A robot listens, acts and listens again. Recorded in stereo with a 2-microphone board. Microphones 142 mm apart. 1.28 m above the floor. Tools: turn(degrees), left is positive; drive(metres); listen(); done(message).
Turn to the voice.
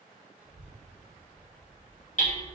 turn(degrees=-30)
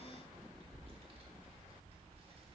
turn(degrees=-140)
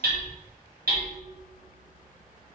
turn(degrees=-20)
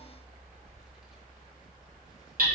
done("Found it: a child speaking, straight ahead, 1 to 2 m away.")